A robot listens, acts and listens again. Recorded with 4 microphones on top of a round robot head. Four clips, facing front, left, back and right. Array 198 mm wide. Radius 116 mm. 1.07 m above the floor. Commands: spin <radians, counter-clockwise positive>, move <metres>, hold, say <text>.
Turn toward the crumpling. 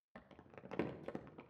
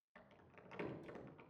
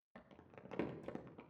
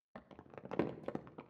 spin -1.57
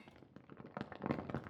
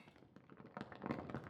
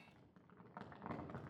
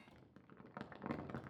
spin 0.17
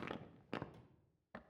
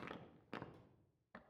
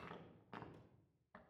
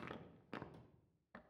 say Found it: crumpling, straight ahead, under 1 m away.